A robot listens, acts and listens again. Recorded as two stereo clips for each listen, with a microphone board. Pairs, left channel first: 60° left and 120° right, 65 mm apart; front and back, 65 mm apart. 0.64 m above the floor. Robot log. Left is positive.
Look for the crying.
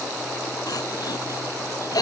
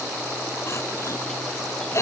note: The crying: 45° left.
cmd yaw +45
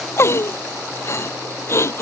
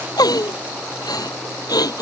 note: The crying is now 10° left.
cmd yaw +10
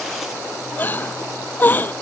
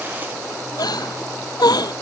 end: Found it: crying, straight ahead.